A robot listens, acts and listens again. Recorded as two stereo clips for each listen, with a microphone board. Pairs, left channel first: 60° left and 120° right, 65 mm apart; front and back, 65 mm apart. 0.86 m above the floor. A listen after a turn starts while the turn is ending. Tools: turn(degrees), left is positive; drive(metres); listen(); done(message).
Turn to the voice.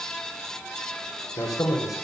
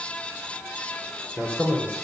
turn(degrees=65)
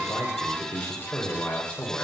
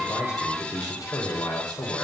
done("Found it: a man speaking, straight ahead.")